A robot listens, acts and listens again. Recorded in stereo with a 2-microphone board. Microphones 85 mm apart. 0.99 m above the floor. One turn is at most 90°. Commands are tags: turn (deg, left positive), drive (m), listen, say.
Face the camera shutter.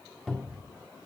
<listen/>
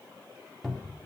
<listen/>
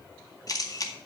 <turn deg="45"/>
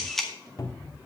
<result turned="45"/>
<say>Found it: a camera shutter, straight ahead.</say>